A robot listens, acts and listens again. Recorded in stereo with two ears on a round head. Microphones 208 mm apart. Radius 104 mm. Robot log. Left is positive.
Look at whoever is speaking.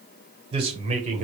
note: The man speaking: about 35° right or 145° right.
cmd yaw -35
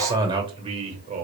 note: The man speaking: about 35° right or 145° right.
cmd yaw -35
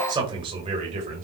note: The man speaking: about 30° right or 150° right.
cmd yaw -30
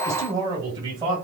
note: The man speaking: about 20° right or 160° right.
cmd yaw -20
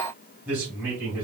note: So it is at 10° right.
cmd yaw -10
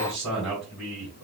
end: Found it: a man speaking, straight ahead, 2 to 4 m away.